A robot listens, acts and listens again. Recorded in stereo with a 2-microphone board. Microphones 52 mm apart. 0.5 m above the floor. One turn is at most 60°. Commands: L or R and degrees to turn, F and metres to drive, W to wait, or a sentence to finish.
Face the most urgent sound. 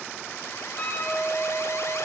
W
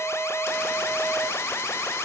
L60
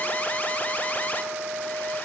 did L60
L35
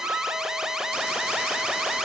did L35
R10
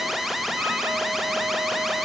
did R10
Facing the alarm.